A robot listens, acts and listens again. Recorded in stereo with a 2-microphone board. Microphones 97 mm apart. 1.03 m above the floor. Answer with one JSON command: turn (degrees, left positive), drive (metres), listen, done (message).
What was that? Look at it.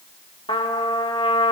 {"turn": 70}
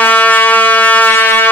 {"turn": 25}
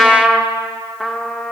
{"done": "Found it: a trumpet, straight ahead, 1 to 2 m away."}